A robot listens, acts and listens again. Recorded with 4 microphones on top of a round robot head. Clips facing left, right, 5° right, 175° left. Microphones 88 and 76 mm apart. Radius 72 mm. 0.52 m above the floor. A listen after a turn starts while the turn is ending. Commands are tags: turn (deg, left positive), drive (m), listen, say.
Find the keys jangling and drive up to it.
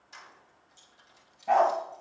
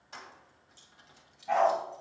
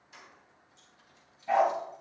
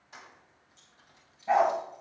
<turn deg="-130"/>
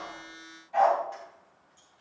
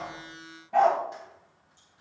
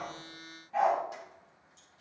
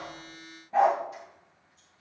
<listen/>
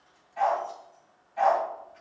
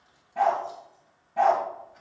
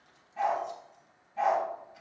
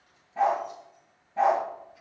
<listen/>
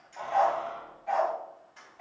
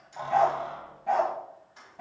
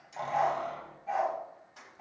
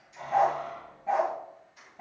<turn deg="-15"/>
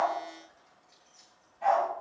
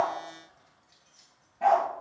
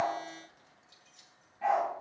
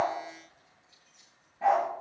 <listen/>
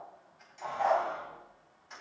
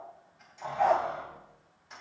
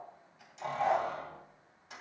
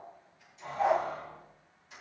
<drive m="1.0"/>
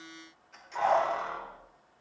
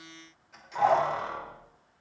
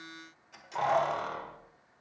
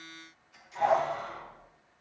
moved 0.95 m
<drive m="1.0"/>
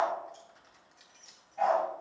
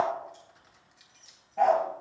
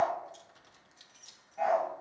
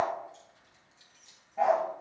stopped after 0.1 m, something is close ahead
<say>Arrived at the keys jangling, straight ahead.</say>